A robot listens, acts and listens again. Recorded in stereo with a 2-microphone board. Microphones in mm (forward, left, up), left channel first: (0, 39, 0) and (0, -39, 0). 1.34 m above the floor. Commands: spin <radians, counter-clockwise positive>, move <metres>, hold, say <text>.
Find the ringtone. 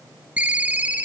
spin -0.35
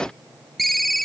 say Found it: a ringtone, straight ahead, under 1 m away.